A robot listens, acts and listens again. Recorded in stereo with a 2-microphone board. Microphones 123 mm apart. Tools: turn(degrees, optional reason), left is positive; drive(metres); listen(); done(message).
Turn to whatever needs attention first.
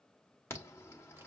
turn(degrees=25, reason="The alarm: about 25° left or 155° left.")
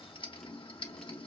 turn(degrees=130, reason="So it is at 130° left.")
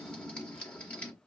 turn(degrees=10, reason="The alarm is now 10° left.")
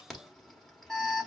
done("Facing the alarm, 1 to 2 m away.")